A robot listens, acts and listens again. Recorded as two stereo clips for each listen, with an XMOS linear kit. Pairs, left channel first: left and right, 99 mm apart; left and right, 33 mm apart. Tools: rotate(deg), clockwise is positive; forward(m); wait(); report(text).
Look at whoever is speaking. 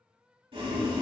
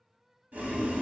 wait()
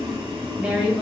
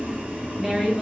rotate(30)
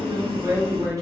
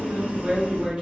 rotate(140)
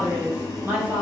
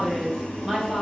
rotate(20)
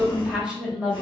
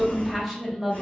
rotate(10)
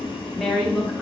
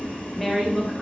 report("Found it: a woman speaking, straight ahead.")